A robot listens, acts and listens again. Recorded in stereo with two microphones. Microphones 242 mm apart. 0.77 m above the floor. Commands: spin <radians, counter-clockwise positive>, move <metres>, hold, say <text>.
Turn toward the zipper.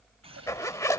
spin 0.52
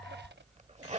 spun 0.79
spin -0.52
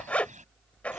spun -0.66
say Found it: a zipper, straight ahead.